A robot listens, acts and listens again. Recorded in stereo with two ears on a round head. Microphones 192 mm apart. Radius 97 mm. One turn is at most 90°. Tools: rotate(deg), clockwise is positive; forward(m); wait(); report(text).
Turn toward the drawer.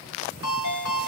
wait()
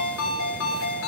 wait()
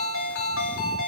report("I can't make out a drawer to turn to.")